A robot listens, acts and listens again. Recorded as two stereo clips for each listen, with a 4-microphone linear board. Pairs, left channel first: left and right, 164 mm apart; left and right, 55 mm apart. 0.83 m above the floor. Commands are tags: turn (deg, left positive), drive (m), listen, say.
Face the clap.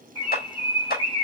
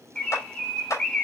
<turn deg="60"/>
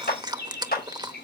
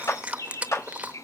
<turn deg="60"/>
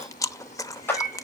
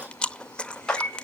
<turn deg="10"/>
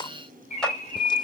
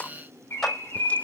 <say>Found it: a clap, straight ahead.</say>